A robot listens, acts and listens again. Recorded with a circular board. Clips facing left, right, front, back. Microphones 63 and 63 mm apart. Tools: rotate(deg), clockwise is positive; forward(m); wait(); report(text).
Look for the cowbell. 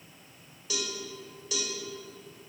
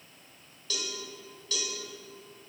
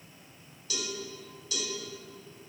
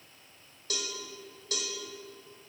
rotate(-165)
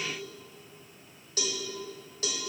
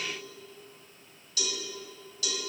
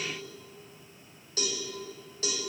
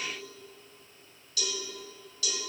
rotate(-45)
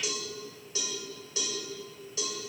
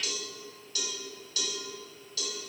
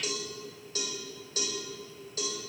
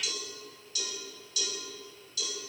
rotate(-30)
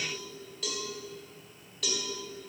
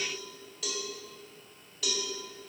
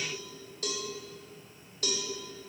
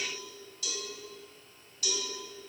report("Found it: a cowbell, straight ahead.")